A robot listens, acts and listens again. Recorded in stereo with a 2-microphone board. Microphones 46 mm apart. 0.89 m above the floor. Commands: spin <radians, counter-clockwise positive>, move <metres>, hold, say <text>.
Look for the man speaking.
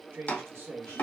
spin -0.96
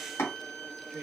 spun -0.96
spin -0.79
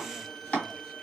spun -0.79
hold
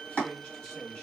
spin 0.26
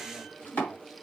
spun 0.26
hold
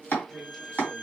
hold
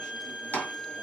say Facing where the man speaking came from. I can't hear it now.